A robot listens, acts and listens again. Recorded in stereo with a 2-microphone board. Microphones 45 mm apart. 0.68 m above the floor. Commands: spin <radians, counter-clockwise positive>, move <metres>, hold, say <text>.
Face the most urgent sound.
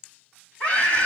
spin 0.52
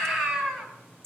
say Found it: a scream, straight ahead, over 4 m away.